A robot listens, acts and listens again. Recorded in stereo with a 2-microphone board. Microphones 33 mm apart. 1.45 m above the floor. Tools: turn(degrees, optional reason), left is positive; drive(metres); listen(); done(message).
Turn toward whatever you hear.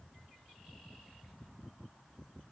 listen()
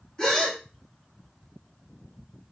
turn(degrees=25, reason="The gasp: about 25° left or 155° left.")
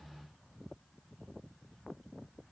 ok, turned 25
listen()
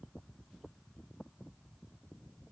done("I heard a gasp, but can't make it out now. It was about straight ahead or 130° left.")